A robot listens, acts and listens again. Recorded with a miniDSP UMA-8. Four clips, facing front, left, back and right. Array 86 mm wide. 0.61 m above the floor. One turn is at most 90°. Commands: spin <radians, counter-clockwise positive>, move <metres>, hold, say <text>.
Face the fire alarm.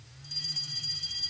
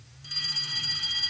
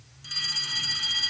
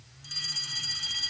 spin 1.57
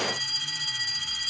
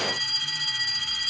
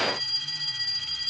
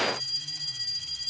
spin 1.31
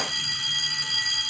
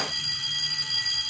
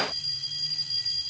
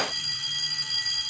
say Facing the fire alarm.